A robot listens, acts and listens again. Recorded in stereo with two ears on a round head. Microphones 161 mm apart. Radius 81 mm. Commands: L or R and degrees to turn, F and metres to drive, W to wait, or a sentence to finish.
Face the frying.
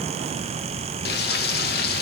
L60
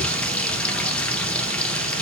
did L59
Facing the frying, 1 to 2 m away.